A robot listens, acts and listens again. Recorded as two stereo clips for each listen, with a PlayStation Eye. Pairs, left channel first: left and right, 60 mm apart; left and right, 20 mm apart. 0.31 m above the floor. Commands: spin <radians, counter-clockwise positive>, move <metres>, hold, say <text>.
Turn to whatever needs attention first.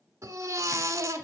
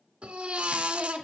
spin -1.05
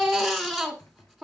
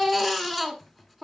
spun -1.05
say Found it: a baby crying, straight ahead, 1 to 2 m away.